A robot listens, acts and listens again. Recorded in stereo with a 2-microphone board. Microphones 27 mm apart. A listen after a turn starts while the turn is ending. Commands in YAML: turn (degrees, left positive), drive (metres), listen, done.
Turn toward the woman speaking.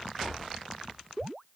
listen: true
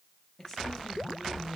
turn: 20
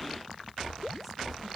listen: true
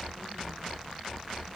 listen: true
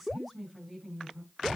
done: "Found it: a woman speaking, straight ahead, over 4 m away."